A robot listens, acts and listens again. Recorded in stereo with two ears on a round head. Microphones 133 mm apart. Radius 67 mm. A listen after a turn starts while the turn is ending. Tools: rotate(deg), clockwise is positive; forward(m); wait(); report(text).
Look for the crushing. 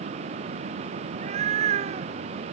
wait()
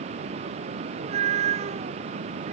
wait()
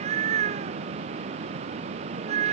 report("I can't make out crushing to turn to.")